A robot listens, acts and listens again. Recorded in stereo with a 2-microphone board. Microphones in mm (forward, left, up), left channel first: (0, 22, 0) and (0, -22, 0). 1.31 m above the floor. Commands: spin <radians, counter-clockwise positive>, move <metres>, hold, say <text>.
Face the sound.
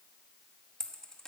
spin 0.52
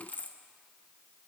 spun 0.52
spin 2.36
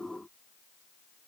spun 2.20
spin 0.17
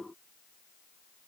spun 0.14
say I heard a dropped coin from this way, but can't make it out now.